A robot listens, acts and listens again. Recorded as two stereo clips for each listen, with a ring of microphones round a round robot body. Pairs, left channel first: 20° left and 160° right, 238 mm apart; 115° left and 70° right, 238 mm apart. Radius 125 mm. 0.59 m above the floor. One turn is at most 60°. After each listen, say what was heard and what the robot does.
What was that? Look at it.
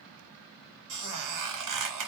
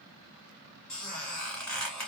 The squeak: 160° right. Turn 60° right.
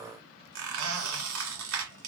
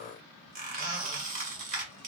The squeak is now 125° right. Turn 60° right.
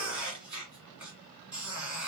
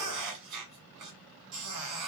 The squeak is now 70° right. Turn 60° right.
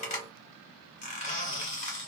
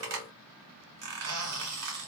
The squeak is now 40° right. Turn 40° right.
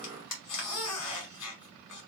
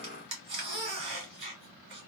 Found it: a squeak, straight ahead, 1 to 2 m away.